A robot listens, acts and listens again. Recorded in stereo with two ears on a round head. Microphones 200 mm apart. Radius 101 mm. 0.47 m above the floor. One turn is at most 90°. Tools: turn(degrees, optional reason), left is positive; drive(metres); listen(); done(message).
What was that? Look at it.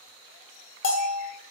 turn(degrees=55, reason="The bell: about 55° left or 125° left.")
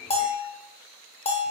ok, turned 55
turn(degrees=30, reason="So it is at 30° left.")
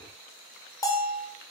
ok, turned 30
turn(degrees=20, reason="The bell is now 20° left.")
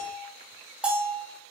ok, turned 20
done("Facing the bell, 1 to 2 m away.")